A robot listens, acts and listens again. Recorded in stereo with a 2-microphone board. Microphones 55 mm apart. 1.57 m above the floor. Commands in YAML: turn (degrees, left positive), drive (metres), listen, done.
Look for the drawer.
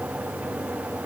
listen: true
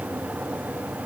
listen: true
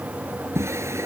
turn: -55
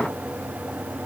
listen: true
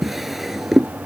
done: "Facing the drawer."